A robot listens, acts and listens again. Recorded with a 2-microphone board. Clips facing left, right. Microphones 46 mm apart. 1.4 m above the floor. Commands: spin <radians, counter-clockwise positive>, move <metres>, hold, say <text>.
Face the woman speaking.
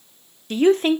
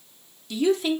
spin 0.79
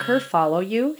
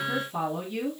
spin 1.57
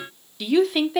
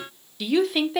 say Found it: a woman speaking, straight ahead, under 1 m away.